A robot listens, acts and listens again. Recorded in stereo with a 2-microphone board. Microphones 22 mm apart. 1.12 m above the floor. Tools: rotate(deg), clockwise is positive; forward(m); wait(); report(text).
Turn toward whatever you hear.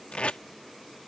rotate(-90)
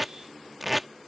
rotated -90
report("Facing the tape being pulled.")